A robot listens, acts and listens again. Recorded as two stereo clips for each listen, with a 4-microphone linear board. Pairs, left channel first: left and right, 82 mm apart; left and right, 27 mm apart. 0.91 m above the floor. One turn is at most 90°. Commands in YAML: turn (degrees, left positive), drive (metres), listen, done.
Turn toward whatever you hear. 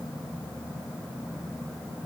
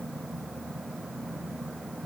listen: true
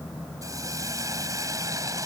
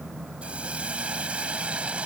turn: -45
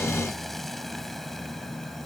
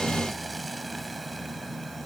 listen: true
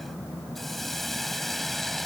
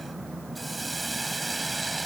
done: "Facing the hiss."